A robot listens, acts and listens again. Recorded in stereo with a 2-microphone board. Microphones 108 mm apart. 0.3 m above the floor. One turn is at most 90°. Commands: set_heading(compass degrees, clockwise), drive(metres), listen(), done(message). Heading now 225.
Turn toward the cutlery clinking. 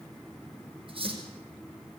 set_heading(280)
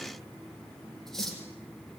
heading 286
done("Facing the cutlery clinking, over 4 m away.")